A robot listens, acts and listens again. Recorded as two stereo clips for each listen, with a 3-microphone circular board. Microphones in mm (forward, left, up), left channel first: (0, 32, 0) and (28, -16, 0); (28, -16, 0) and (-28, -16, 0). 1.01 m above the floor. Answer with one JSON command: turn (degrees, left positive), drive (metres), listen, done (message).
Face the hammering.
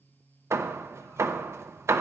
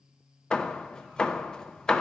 {"turn": -75}
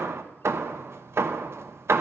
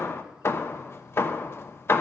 {"turn": -35}
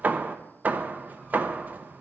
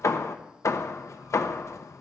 {"done": "Facing the hammering."}